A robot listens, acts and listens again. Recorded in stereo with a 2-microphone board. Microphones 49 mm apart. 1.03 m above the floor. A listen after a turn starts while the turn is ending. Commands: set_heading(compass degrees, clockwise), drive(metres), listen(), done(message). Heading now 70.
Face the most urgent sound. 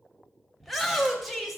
set_heading(40)
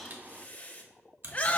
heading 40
set_heading(250)
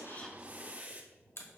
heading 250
listen()
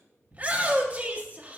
set_heading(280)
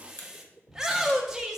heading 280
set_heading(290)
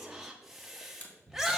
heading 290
done("Found it: a shout, straight ahead, 1 to 2 m away.")